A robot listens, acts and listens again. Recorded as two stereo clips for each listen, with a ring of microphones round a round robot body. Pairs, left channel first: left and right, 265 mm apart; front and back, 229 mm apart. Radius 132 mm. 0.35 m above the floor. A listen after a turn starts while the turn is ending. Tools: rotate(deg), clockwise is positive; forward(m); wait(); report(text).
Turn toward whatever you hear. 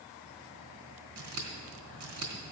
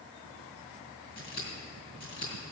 rotate(55)
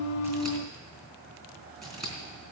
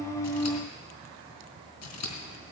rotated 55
report("Facing the scissors, 2 to 4 m away.")